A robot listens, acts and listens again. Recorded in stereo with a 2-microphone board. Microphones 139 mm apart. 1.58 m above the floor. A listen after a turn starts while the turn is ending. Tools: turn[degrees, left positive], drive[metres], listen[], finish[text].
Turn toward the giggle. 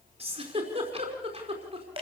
Thought: The giggle: about 45° right or 135° right.
Action: turn[-45]
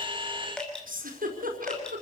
Thought: So it is at 85° right.
Action: turn[-85]
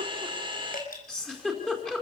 Action: finish[Facing the giggle.]